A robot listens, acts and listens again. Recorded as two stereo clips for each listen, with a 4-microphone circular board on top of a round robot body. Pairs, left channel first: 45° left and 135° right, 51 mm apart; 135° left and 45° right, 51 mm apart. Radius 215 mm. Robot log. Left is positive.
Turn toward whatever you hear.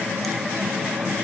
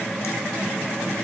cmd idle
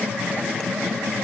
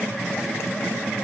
cmd idle
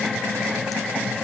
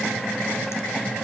end: I can't make out anything to turn to.